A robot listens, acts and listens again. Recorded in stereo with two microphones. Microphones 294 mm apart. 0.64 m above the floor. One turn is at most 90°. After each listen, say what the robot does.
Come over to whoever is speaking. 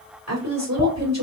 Turn 60° right.
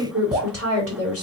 Turn 55° right.
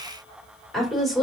Drive 1.0 m forward.
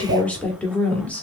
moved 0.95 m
Drive 1.0 m forward.
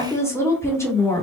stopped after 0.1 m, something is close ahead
Turn 10° left.
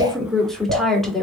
Arrived at the woman speaking, straight ahead.